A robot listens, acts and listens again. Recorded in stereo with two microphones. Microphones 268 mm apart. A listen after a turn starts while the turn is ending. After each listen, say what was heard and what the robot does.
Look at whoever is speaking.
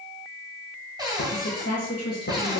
The woman speaking: about 65° left or 115° left. Turn 65° left.
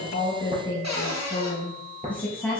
Found it: a woman speaking, straight ahead, 2 to 4 m away.